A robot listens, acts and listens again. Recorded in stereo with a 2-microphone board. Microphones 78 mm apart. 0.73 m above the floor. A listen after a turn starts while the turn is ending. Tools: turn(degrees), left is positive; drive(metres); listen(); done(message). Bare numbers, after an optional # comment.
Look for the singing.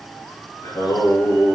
turn(90)
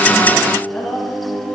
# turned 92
done("Facing the singing.")